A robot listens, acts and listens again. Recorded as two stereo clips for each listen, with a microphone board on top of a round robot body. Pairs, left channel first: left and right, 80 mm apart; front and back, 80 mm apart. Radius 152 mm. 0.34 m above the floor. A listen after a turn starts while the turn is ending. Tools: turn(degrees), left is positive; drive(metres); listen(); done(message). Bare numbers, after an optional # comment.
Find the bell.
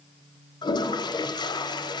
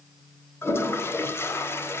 listen()
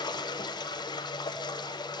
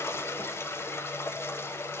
listen()
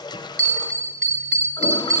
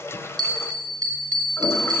# The bell: 170° left.
turn(170)
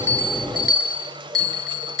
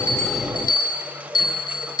done("Found it: a bell, straight ahead.")